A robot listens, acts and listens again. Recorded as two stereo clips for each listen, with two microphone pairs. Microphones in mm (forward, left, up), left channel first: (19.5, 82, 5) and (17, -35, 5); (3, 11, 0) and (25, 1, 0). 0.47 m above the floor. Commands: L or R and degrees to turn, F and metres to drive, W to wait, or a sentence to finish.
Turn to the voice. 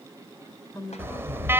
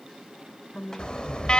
L135
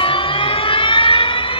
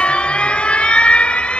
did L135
W
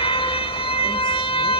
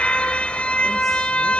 W
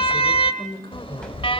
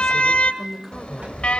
L60
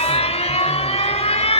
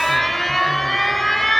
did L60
W
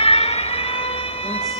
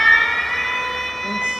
W
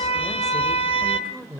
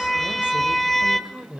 Facing the woman speaking.